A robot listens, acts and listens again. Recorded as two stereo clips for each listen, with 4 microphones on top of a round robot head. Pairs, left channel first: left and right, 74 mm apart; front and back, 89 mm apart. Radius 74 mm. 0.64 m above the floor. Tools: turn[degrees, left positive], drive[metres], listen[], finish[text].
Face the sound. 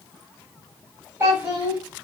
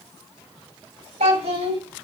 Thought: The child speaking: 160° right.
Action: turn[-160]
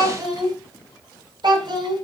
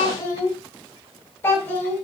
Thought: The child speaking is now 70° right.
Action: turn[-70]
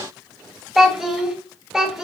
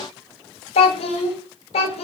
Action: finish[Found it: a child speaking, straight ahead.]